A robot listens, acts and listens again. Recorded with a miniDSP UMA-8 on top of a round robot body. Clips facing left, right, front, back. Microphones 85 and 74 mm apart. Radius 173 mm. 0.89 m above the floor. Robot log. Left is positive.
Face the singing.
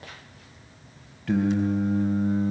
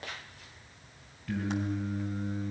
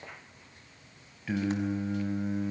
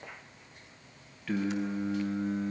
note: The singing: 80° left.
cmd yaw +80
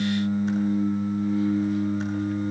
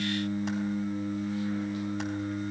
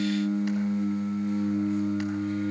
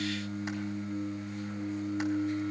note: The singing is now 20° left.
cmd yaw +20
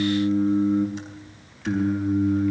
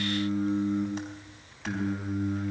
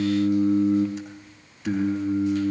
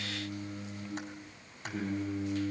end: Facing the singing.